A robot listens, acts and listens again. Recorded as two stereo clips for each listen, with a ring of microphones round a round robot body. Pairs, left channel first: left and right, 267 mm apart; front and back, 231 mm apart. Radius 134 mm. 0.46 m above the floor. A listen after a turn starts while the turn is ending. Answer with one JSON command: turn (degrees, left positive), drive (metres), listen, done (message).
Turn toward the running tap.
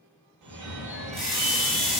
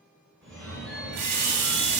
{"turn": 180}
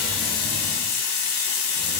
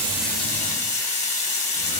{"turn": 60}
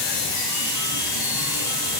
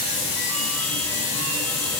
{"turn": -10}
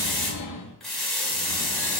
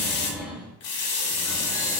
{"done": "Found it: a running tap, straight ahead, under 1 m away."}